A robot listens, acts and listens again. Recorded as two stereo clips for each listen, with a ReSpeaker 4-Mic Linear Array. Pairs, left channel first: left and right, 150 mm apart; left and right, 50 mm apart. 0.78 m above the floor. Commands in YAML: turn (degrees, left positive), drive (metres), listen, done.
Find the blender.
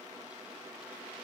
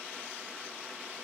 listen: true
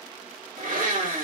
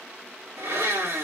turn: -60
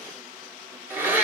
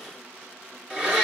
turn: -15
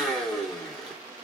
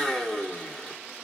done: "Found it: a blender, straight ahead."